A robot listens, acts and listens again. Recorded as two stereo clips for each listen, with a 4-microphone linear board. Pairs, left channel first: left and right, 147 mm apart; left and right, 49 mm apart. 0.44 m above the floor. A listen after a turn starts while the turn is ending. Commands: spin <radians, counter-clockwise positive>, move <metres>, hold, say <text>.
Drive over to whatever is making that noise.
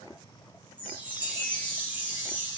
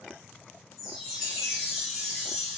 spin -0.52
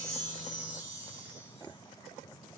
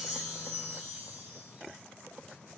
spin -2.44
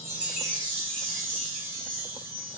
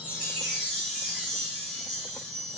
move 1.0
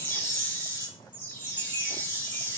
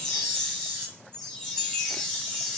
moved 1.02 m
spin 0.26
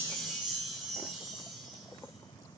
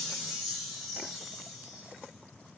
move 1.0
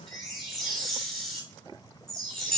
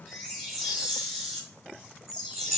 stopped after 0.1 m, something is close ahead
say Arrived at the chime, straight ahead.